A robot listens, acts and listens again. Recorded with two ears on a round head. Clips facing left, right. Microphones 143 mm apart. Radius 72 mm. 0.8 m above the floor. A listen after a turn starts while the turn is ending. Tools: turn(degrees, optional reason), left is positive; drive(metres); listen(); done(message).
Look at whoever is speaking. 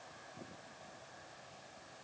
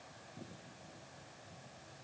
listen()
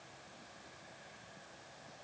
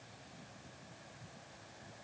listen()
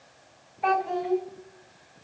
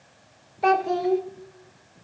turn(degrees=-50, reason="The child speaking: about 50° right or 130° right.")
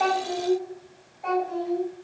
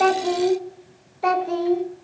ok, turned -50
turn(degrees=-80, reason="So it is at 80° right.")
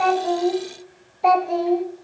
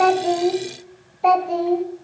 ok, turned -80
done("Facing the child speaking, 1 to 2 m away.")